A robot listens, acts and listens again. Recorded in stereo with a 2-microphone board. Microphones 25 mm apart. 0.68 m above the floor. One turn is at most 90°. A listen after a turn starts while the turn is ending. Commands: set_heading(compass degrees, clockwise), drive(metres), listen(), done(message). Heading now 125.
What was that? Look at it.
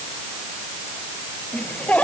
set_heading(60)
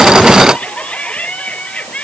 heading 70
set_heading(5)
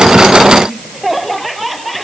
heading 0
done("Facing the laughter.")